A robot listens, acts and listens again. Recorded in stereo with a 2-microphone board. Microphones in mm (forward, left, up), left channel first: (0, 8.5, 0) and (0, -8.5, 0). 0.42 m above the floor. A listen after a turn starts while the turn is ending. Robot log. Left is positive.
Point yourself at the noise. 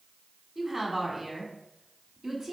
note: The woman speaking: about 30° right or 150° right.
cmd yaw -30
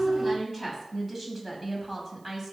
note: So it is at 15° right.
cmd yaw -15
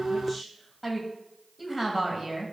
note: The woman speaking is now 15° right.
cmd yaw -15
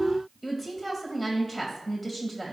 end: Found it: a woman speaking, straight ahead, 2 to 4 m away.